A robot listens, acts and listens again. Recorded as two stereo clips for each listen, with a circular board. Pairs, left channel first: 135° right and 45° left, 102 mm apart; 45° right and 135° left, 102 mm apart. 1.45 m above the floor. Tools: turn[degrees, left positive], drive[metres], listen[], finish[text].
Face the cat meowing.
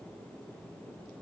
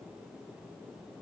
Action: listen[]
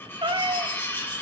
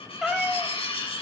Thought: The cat meowing: 50° left.
Action: turn[50]
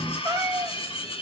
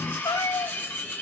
Action: finish[Found it: a cat meowing, straight ahead.]